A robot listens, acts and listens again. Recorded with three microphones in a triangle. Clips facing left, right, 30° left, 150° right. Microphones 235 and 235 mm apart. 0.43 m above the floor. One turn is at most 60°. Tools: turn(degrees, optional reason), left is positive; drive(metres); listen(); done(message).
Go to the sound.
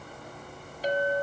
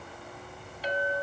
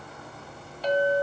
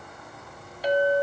turn(degrees=60, reason="The clink: 135° left.")
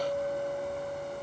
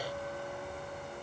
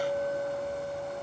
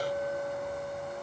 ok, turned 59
turn(degrees=60, reason="The clink is now 75° left.")
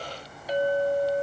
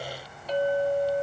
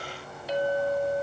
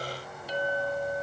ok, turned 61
turn(degrees=15, reason="The clink is now 15° left.")
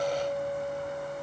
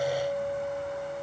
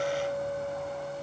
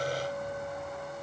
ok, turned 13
drive(metres=1.0)
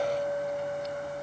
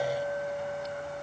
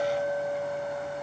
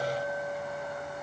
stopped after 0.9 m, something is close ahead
done("I am next to the clink.")